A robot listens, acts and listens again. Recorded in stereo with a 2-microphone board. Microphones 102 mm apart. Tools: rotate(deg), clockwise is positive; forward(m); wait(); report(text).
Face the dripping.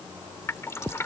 rotate(-25)
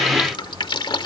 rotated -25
rotate(-125)
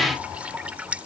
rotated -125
rotate(15)
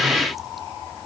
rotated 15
wait()
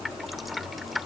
report("Facing the dripping.")